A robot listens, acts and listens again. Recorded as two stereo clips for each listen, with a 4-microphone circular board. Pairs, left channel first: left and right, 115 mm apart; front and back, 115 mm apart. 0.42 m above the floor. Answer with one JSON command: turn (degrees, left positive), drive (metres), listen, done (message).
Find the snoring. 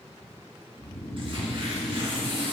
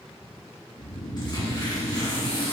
{"turn": 15}
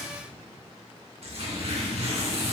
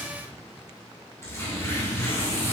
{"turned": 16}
{"done": "Found it: snoring, straight ahead."}